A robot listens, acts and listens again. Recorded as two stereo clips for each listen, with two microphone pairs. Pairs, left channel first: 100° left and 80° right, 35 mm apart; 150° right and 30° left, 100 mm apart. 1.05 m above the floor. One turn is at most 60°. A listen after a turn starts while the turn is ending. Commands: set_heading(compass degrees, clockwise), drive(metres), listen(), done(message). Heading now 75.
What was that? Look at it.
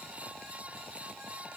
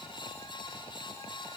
listen()
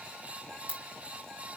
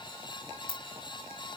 set_heading(115)
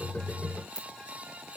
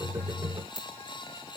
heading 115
set_heading(100)
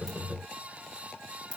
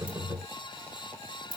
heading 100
done("Found it: a ringtone, straight ahead.")